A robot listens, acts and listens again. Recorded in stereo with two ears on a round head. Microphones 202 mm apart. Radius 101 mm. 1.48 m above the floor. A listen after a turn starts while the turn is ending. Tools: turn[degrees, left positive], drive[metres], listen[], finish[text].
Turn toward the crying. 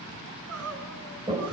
Thought: The crying: about 75° right or 105° right.
Action: turn[-75]
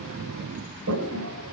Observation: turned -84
Action: listen[]
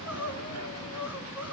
Thought: So it is at 10° right.
Action: turn[-10]
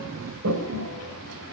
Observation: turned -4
Action: listen[]
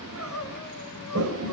Action: finish[Found it: crying, straight ahead.]